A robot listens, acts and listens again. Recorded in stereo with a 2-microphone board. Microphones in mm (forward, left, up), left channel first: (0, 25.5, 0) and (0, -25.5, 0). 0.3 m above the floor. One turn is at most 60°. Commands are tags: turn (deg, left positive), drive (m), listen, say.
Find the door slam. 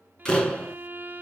<turn deg="15"/>
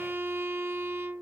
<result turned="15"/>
<listen/>
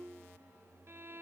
<say>I heard a door slam, but can't make it out now. It was about straight ahead or 150° left.</say>